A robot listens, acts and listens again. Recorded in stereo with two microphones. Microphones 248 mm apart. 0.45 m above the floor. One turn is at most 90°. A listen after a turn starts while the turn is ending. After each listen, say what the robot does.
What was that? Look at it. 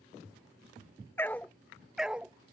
Turn 30° right.
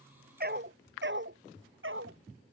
Turn 90° right.
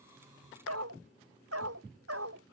Turn 65° right.
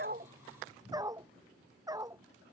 Turn 15° right.
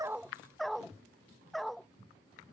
Facing the dog barking.